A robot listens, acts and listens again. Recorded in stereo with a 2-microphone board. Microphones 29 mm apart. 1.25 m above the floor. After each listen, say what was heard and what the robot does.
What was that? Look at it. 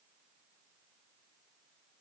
Keep listening.
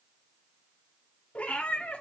The cat meowing: about 50° left or 130° left. Turn 50° left.
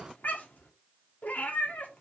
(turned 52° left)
So it is at 75° left. Turn 75° left.
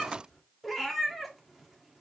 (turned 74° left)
Found it: a cat meowing, straight ahead.